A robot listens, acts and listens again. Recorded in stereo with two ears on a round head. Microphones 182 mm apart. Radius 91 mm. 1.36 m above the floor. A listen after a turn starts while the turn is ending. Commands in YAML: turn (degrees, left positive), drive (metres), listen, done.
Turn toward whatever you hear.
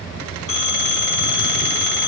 turn: 90
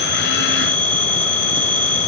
turn: 10
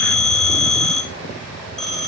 done: "Found it: a phone ringing, straight ahead."